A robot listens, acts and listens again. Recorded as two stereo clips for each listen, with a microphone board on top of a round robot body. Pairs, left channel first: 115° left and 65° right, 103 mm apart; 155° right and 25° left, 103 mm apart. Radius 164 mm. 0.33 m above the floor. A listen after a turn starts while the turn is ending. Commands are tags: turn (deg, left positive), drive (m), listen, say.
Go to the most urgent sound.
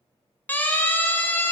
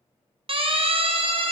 <turn deg="40"/>
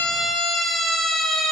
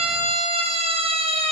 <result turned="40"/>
<turn deg="25"/>
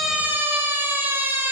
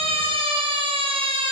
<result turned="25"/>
<drive m="1.0"/>
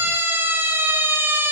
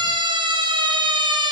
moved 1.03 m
<drive m="1.0"/>
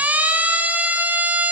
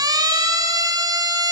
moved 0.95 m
<drive m="1.0"/>
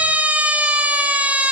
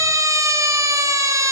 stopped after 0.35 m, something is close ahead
<say>I am next to the siren.</say>